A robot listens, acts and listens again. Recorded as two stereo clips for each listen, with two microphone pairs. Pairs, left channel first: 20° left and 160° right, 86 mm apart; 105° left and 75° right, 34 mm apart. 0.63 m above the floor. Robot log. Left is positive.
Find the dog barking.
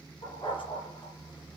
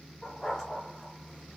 note: The dog barking: 35° left.
cmd yaw +35
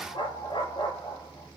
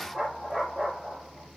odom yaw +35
note: The dog barking is now 15° left.
cmd yaw +15
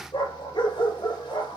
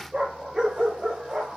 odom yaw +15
end: Facing the dog barking.